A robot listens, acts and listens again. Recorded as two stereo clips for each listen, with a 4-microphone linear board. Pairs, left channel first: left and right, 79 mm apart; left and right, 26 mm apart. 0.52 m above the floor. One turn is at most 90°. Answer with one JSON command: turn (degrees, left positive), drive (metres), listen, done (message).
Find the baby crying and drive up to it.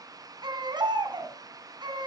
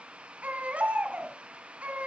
{"turn": -70}
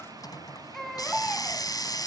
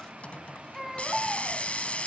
{"drive": 1.0}
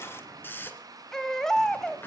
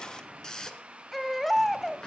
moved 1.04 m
{"drive": 1.0}
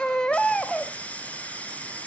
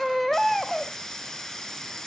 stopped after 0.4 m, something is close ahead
{"turn": 10}
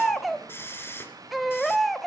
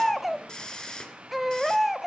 {"done": "I am next to the baby crying."}